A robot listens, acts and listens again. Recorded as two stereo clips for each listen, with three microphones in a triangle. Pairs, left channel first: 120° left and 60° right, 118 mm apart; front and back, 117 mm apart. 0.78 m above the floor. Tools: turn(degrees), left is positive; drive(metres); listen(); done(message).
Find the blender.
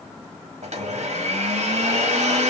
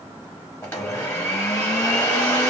turn(degrees=-70)
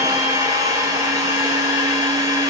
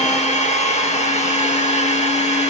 done("Found it: a blender, straight ahead.")